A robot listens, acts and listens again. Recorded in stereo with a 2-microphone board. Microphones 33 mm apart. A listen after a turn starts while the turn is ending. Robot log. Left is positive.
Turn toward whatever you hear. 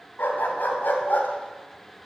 cmd yaw +90
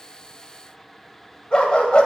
note: So it is at 35° left.
cmd yaw +35
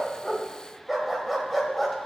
end: Found it: a dog barking, straight ahead.